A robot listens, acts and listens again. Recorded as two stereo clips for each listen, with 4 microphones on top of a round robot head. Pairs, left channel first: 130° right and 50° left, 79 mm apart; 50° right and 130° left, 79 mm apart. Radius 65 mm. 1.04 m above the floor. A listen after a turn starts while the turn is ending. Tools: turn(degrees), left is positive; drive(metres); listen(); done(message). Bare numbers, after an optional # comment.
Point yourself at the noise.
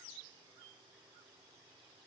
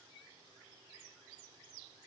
listen()
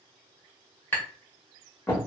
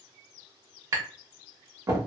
# The tapping: 170° left.
turn(170)
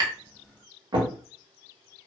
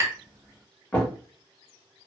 # The tapping is now 15° left.
turn(15)
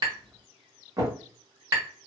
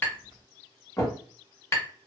done("Facing the tapping.")